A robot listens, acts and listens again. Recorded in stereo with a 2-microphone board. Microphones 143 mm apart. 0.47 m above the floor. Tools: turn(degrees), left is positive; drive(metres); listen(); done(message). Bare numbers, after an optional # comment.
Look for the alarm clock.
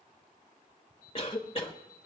turn(30)
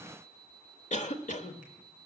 # So it is at 145° left.
turn(145)
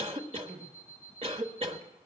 # The alarm clock is now 10° right.
turn(-10)
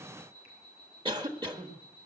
done("Found it: an alarm clock, straight ahead, 2 to 4 m away.")